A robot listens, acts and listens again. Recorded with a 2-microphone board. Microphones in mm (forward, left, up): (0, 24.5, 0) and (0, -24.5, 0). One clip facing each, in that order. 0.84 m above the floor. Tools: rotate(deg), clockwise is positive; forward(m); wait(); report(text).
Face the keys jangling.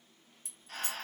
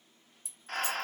rotate(-55)
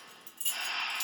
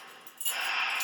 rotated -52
report("Facing the keys jangling.")